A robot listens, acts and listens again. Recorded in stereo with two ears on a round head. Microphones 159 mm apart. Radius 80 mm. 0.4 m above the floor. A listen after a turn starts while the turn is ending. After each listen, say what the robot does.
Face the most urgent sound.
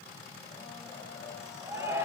Turn 15° right.
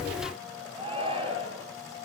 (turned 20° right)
Turn 145° right.
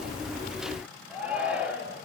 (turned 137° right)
Found it: a shout, straight ahead, over 4 m away.